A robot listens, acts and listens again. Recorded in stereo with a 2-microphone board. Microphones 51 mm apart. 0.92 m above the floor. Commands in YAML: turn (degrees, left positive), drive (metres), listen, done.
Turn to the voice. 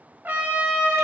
listen: true
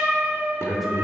turn: 30
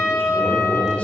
turn: 150
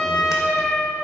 listen: true
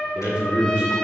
turn: -20
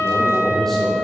done: "Facing the man speaking, 2 to 4 m away."